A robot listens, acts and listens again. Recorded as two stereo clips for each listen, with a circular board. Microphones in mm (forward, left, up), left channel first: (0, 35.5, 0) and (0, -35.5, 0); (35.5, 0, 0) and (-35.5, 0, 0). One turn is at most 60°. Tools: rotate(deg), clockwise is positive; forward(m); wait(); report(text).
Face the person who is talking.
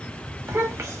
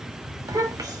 rotate(60)
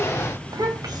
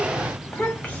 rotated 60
rotate(60)
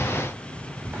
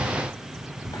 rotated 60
rotate(20)
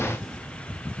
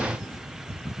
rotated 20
wait()
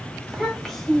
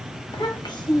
report("Found it: a child speaking, straight ahead, 1 to 2 m away.")